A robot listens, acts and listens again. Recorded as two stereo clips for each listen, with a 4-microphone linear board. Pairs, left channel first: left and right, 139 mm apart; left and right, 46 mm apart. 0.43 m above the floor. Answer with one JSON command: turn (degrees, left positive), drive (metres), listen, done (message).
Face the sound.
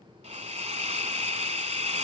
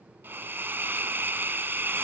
{"turn": -50}
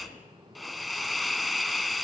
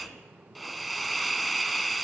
{"done": "Found it: a hiss, straight ahead, 1 to 2 m away."}